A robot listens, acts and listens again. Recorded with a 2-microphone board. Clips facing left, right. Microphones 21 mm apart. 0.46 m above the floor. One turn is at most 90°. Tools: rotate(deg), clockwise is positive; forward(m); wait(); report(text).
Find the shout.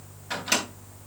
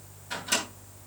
wait()
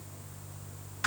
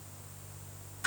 wait()
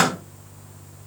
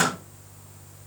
report("I can't make out a shout to turn to.")